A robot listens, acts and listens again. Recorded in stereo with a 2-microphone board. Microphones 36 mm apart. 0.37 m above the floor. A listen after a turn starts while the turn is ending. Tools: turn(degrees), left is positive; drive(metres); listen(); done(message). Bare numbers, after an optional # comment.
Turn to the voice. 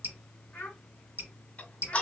# The child speaking: about 60° left or 120° left.
turn(60)
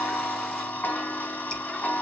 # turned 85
listen()
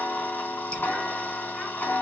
listen()
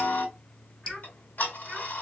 done("I heard a child speaking, but can't make it out now. It was about 25° right or 35° left.")